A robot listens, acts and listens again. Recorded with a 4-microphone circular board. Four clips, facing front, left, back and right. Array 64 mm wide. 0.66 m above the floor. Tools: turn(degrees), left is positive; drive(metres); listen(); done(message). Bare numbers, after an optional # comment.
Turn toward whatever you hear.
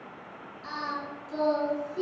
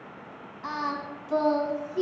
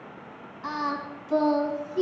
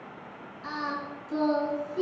# The singing: 130° left.
turn(130)
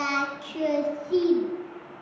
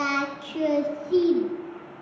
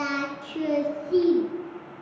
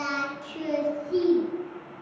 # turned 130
# The singing is now 45° left.
turn(45)
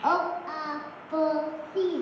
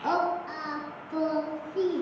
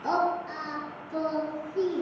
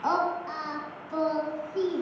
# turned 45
# The singing is now 25° right.
turn(-25)
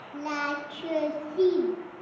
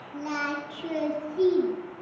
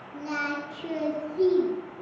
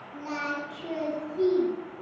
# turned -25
# The singing is now 10° left.
turn(10)
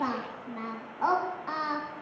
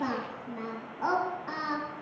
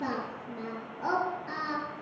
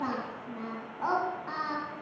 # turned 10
done("Found it: singing, straight ahead.")